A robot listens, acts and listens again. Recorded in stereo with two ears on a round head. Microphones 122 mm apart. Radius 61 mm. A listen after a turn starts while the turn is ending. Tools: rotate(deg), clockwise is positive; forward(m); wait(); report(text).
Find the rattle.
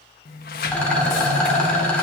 rotate(-30)
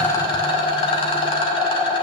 rotate(-140)
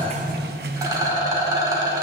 rotate(25)
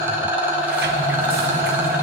rotate(15)
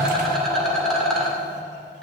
report("Facing the rattle.")